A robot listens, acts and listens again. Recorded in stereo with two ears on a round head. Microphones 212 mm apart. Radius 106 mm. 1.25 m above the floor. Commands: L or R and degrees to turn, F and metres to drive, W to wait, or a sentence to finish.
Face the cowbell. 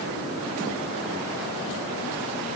W
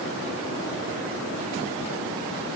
W
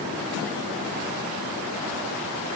I can't make out a cowbell to turn to.